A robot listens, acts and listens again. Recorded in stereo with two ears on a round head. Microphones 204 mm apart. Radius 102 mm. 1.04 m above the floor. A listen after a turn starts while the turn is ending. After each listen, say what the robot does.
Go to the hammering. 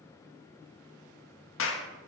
Keep listening.
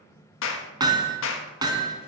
Turn 20° right.
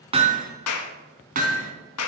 Turn 140° right.
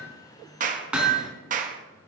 Drive 1.0 m forward.
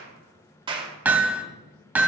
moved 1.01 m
Turn 10° right.
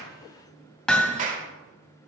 Drive 1.0 m forward.
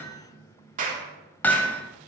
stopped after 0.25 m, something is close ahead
Turn 10° left.
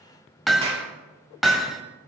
Arrived at the hammering, straight ahead.